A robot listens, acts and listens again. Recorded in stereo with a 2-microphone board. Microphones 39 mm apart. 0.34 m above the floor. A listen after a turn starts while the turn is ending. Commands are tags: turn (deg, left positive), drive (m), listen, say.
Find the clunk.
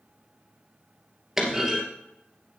<turn deg="-30"/>
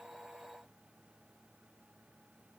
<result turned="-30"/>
<listen/>
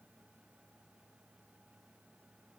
<say>I heard a clunk, but can't make it out now. It was about 20° left or 140° right.</say>